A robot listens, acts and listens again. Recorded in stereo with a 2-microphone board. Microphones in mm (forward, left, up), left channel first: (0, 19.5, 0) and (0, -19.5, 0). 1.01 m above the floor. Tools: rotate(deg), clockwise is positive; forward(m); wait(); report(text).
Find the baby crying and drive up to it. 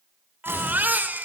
rotate(50)
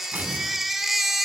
forward(1.0)
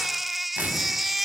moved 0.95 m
forward(1.0)
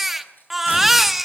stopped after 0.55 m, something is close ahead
report("I am next to the baby crying.")